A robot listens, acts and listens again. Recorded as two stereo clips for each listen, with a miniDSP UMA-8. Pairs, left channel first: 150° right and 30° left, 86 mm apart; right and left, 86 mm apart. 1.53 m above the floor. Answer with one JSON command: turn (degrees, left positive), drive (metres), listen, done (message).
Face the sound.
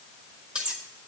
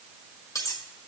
{"turn": -45}
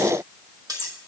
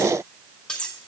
{"turn": -10}
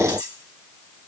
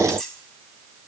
{"done": "Facing the cutlery clinking, 1 to 2 m away."}